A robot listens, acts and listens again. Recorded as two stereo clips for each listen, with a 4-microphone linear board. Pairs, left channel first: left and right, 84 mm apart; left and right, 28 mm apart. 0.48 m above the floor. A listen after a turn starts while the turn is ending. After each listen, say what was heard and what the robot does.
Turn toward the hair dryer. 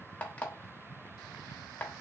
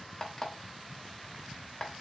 Keep listening.
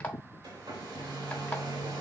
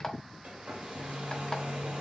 The hair dryer: about 65° right or 115° right. Turn 65° right.
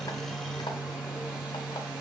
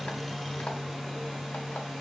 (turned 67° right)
So it is at 15° right. Turn 15° right.
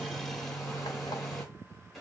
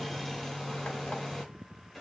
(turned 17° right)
Facing the hair dryer.